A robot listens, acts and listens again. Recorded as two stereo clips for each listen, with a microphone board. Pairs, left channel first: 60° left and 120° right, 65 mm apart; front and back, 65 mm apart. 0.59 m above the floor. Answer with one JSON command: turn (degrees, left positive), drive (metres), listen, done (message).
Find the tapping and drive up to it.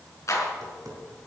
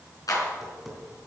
{"turn": -95}
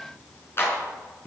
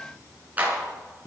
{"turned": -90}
{"drive": 1.0}
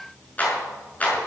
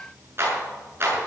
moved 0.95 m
{"listen": true}
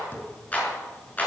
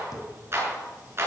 {"drive": 1.0}
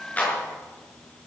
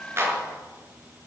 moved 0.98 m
{"listen": true}
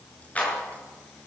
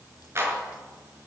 {"listen": true}
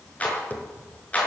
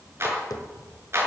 {"drive": 1.0}
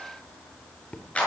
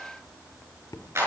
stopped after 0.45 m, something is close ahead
{"done": "I am next to the tapping."}